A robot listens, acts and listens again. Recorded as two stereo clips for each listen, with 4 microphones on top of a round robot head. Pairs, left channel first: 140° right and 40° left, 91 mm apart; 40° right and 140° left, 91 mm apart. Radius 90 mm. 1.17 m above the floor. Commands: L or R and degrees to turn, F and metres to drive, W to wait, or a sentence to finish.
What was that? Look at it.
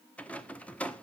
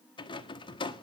R65
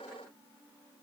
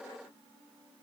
W
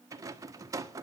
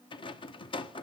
R15
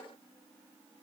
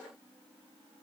W
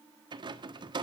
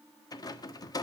Found it: a rattle, straight ahead, 1 to 2 m away.